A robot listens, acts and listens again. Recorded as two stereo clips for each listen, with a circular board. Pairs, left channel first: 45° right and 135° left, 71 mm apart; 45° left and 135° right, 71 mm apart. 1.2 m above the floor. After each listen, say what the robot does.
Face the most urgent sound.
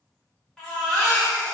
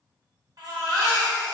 Turn 125° right.
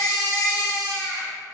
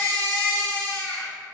Turn 30° right.
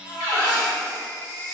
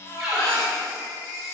Found it: a baby crying, straight ahead, 1 to 2 m away.